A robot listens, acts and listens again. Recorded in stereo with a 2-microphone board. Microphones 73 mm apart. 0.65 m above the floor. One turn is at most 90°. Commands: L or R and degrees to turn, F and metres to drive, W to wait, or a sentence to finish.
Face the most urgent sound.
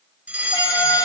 R20
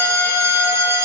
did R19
R90
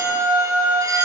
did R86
R55
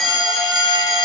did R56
Found it: a fire alarm, straight ahead.